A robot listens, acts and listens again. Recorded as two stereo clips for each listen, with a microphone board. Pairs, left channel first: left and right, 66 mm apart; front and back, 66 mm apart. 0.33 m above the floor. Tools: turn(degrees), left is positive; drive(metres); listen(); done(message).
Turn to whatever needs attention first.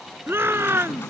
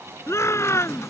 turn(degrees=-40)
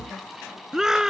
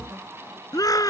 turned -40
turn(degrees=-10)
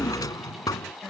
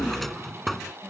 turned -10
listen()
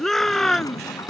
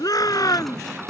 done("Found it: a shout, straight ahead.")